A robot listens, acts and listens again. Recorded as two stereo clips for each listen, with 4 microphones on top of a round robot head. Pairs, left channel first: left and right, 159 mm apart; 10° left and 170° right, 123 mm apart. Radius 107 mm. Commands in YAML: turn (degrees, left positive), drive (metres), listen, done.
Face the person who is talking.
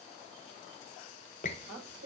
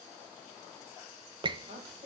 turn: -100
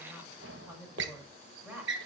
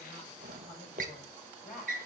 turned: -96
done: "Facing the woman speaking."